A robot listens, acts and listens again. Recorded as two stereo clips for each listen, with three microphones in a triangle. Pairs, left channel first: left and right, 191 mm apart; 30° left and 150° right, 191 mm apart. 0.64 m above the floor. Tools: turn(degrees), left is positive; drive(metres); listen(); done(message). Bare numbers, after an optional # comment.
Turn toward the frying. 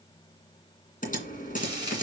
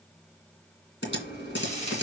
# The frying: 20° right.
turn(-20)
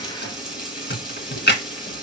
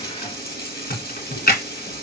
done("Facing the frying.")